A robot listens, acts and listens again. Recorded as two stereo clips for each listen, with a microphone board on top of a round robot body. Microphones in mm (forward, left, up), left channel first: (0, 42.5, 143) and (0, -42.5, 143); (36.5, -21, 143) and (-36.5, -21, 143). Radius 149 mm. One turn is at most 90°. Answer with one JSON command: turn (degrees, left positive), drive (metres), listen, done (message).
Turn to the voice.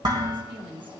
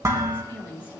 {"turn": -65}
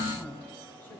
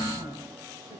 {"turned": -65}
{"listen": true}
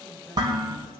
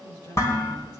{"listen": true}
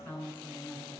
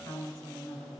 {"turn": 20}
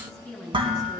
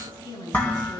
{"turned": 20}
{"done": "Found it: a woman speaking, straight ahead."}